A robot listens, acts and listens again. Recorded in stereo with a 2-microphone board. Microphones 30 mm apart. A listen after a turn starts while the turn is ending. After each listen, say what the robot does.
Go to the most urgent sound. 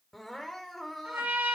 Turn 30° left.
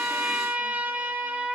Keep listening.
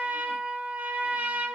Keep listening.
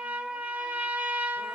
I heard crying, but can't make it out now. It was about 25° right or 145° left. I did not reach it.